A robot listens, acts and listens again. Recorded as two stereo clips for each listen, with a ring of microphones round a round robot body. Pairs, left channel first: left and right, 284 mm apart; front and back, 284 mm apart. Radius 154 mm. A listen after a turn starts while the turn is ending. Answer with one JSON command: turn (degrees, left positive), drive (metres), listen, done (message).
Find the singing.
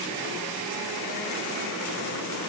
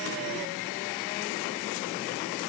{"listen": true}
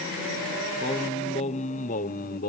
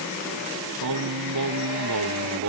{"turn": 150}
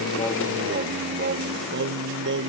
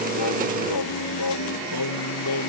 {"turn": -40}
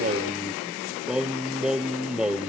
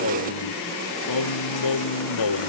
{"done": "Facing the singing."}